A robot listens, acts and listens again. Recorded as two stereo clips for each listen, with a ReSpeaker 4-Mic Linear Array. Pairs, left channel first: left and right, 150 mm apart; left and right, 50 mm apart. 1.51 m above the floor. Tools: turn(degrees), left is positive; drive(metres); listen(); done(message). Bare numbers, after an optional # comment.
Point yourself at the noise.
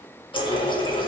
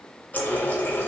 # The running tap: about 35° left or 145° left.
turn(35)
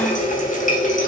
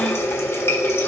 # So it is at 105° left.
turn(105)
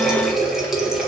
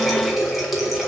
done("Found it: a running tap, straight ahead.")